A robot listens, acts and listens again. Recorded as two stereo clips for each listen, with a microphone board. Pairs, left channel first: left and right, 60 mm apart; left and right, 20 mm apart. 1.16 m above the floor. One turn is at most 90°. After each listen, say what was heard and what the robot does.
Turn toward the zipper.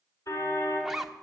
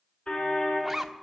Turn 30° right.
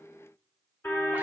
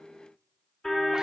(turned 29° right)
Keep listening.
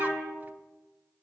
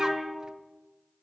Keep listening.
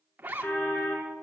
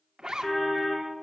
So it is at 150° right. Turn 90° right.
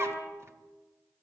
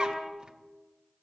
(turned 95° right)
Nothing new. It was at 55° right. Turn 55° right.
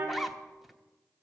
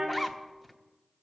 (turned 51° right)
Found it: a zipper, straight ahead.